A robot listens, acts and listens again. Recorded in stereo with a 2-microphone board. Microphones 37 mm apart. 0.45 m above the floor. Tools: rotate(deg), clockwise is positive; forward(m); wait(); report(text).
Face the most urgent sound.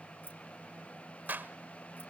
wait()
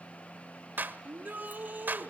rotate(45)
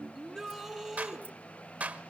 report("Found it: a shout, straight ahead, over 4 m away.")